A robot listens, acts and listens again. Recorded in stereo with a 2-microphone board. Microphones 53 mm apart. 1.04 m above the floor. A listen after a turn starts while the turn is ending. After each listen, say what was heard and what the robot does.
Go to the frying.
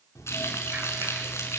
The frying: about 60° left or 120° left. Turn 60° left.
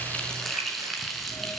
Drive 1.0 m forward.
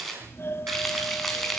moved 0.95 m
Drive 1.0 m forward.
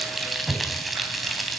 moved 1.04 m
Drive 1.0 m forward.
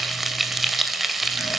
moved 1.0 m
Drive 1.0 m forward.
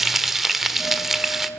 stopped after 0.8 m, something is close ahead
I am next to the frying.